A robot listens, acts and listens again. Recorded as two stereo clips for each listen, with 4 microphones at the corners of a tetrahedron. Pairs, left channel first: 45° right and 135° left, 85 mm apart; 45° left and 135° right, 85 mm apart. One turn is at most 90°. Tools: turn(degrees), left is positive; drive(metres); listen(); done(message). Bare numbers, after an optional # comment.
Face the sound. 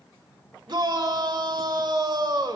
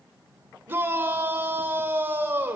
# The shout: 160° left.
turn(90)
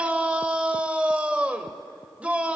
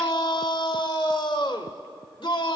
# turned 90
# The shout is now 60° left.
turn(60)
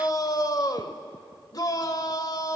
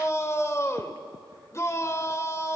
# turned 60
# The shout is now 10° right.
turn(-10)
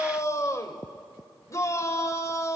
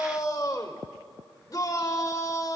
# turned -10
done("Found it: a shout, straight ahead.")